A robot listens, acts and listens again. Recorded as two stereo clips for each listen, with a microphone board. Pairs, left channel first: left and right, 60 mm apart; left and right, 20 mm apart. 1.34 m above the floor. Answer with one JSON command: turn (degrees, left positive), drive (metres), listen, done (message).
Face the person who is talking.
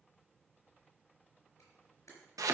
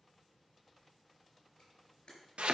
{"listen": true}
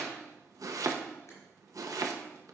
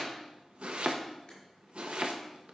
{"listen": true}
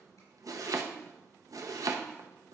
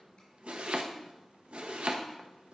{"done": "I can't make out anyone speaking, only chopping and a camera shutter."}